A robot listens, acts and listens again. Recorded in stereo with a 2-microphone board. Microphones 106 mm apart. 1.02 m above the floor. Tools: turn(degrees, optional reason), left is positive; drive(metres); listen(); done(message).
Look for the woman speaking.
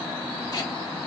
listen()
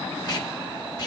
listen()
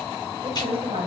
turn(degrees=-70, reason="The woman speaking: about 70° right or 110° right.")
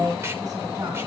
turn(degrees=-35, reason="So it is at 35° right.")
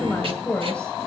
turn(degrees=10, reason="The woman speaking is now 10° left.")
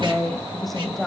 done("Found it: a woman speaking, straight ahead, over 4 m away.")